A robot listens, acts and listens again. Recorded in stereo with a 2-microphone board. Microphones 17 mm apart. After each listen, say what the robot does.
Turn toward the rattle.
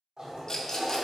Turn 40° left.
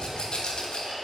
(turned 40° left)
Turn 95° left.
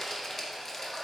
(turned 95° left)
Turn 20° left.
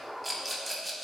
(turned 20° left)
Facing the rattle.